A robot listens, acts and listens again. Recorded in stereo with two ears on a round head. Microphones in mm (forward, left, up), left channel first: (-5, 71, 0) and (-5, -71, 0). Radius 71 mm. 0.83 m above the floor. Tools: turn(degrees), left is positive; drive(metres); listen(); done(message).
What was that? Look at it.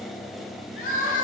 turn(degrees=55)
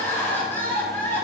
turn(degrees=15)
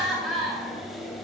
done("Found it: crying, straight ahead, 1 to 2 m away.")